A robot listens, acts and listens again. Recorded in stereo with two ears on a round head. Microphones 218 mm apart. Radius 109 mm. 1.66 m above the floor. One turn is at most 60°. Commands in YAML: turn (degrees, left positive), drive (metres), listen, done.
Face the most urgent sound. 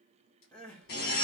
turn: 30
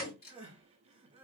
turn: -25
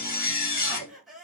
done: "Facing the crying, under 1 m away."